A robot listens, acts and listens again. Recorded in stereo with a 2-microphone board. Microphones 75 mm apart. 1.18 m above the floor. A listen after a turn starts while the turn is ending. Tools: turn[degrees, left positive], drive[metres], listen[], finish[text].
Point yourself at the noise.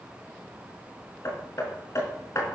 Thought: The hammering: about 45° left or 135° left.
Action: turn[45]
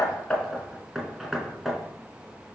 Action: finish[Found it: hammering, straight ahead.]